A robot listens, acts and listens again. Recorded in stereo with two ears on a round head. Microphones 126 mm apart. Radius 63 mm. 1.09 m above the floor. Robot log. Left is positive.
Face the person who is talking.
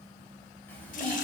cmd yaw +30
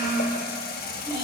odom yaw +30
note: So it is at 30° right.
cmd yaw -30
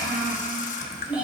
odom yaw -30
note: The child speaking is now 10° right.
cmd yaw -10
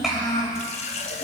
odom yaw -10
end: Facing the child speaking.